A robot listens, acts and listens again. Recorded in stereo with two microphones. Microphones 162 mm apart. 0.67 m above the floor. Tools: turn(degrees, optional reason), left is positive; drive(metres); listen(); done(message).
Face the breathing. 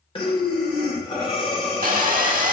turn(degrees=35, reason="The breathing: about 35° left or 145° left.")
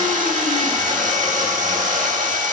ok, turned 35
listen()
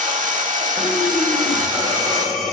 done("Facing the breathing, 1 to 2 m away.")